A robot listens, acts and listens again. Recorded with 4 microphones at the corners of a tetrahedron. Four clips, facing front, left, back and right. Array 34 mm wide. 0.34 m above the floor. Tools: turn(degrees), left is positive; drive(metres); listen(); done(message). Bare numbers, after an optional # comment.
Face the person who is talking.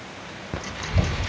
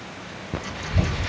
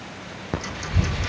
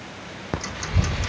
# The child speaking: 20° right.
turn(-20)
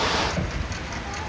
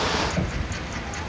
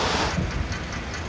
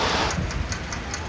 done("Found it: a child speaking, straight ahead, 2 to 4 m away.")